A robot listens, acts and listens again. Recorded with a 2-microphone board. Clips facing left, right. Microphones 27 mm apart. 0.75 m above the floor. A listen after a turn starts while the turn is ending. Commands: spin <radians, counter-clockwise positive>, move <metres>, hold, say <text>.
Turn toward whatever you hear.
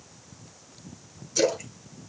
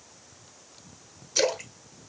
spin -0.61
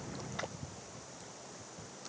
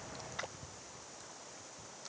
hold
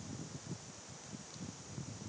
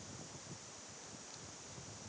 say I heard a splash, but can't make it out now. It was about straight ahead or 110° right.